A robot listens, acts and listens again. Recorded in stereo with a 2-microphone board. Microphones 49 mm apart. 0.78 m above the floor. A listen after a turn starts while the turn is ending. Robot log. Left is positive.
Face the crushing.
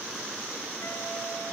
cmd idle
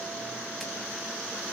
cmd idle
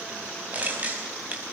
note: The crushing: about 35° right or 145° right.
cmd yaw -35
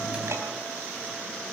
cmd idle
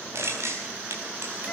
note: So it is at 110° right.
cmd yaw -110
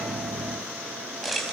end: Facing the crushing.